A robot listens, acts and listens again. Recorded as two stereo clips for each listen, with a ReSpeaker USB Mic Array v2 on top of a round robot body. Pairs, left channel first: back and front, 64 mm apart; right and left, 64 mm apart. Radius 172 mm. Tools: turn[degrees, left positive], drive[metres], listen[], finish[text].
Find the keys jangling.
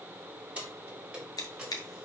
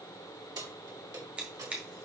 Thought: The keys jangling: 75° left.
Action: turn[75]
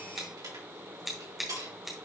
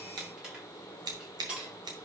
Thought: The keys jangling is now 15° left.
Action: turn[15]
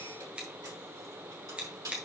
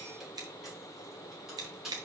Action: finish[Facing the keys jangling, over 4 m away.]